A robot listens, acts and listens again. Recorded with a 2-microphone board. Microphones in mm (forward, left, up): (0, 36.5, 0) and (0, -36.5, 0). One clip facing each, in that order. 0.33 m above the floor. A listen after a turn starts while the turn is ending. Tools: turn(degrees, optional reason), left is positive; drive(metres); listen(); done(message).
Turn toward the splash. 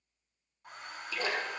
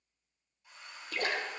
turn(degrees=-60, reason="The splash: about 60° right or 120° right.")
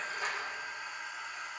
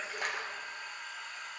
listen()
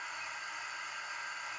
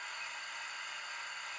done("I heard a splash, but can't make it out now. It was about straight ahead or 60° right.")